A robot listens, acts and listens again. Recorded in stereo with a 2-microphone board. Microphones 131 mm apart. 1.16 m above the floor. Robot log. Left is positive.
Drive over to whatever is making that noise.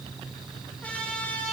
cmd yaw +30
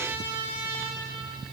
note: So it is at 15° right.
cmd yaw -15
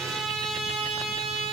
cmd fwd 1.0
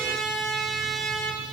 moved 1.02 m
cmd fwd 1.0
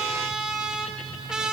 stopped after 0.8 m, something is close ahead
end: Arrived at the trumpet, straight ahead.